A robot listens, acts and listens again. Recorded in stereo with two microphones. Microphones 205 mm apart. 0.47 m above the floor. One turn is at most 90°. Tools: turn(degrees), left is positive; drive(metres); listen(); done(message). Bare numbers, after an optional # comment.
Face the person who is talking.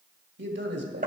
# The man speaking: about 65° right or 115° right.
turn(-65)
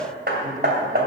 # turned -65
listen()
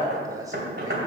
# So it is at 20° right.
turn(-20)
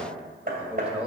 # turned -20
done("Found it: a man speaking, straight ahead, 2 to 4 m away.")